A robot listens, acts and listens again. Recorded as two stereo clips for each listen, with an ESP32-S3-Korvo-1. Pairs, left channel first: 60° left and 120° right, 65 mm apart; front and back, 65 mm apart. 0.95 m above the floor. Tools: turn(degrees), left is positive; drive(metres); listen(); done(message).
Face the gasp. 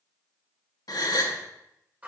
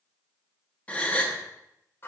turn(degrees=65)
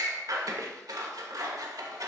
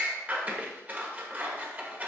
done("Facing where the gasp came from. I can't hear it now.")